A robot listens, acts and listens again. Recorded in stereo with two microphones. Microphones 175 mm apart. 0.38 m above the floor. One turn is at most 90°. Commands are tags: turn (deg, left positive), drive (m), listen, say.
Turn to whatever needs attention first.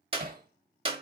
<listen/>
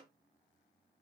<listen/>
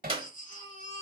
<turn deg="50"/>
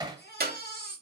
<turn deg="80"/>
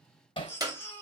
<turn deg="15"/>
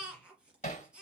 <say>Facing the baby crying, 2 to 4 m away.</say>